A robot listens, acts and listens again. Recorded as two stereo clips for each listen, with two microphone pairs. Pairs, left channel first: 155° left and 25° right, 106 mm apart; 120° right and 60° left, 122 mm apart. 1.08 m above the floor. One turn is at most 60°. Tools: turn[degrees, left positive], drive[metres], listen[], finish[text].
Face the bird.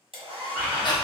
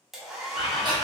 Thought: The bird: 125° right.
Action: turn[-60]
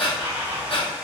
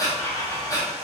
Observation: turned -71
Thought: The bird is now 55° right.
Action: turn[-55]
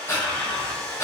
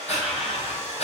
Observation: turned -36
Thought: The bird is now 20° right.
Action: turn[-20]
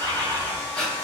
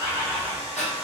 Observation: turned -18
Action: finish[Facing the bird, 2 to 4 m away.]